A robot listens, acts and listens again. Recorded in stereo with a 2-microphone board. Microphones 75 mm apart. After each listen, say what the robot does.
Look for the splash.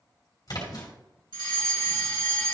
Turn 55° left.
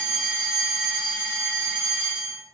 Keep listening.
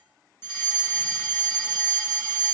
I heard a splash, but can't make it out now. It was about straight ahead or 70° left.